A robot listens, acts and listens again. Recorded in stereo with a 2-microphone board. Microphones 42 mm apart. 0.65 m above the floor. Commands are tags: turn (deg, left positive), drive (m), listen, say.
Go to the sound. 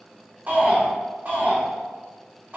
<turn deg="-45"/>
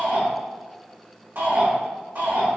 <turn deg="-80"/>
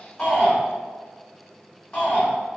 <turn deg="25"/>
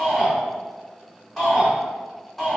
<drive m="1.0"/>
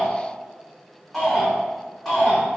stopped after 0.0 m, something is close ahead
<say>Blocked. The shout is further on, straight ahead.</say>